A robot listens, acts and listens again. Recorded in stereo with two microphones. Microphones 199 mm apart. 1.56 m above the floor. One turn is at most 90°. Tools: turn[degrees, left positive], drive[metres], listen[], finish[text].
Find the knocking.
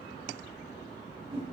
Action: listen[]
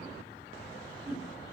Action: listen[]
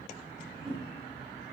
Action: finish[I can't make out knocking, only a whoosh.]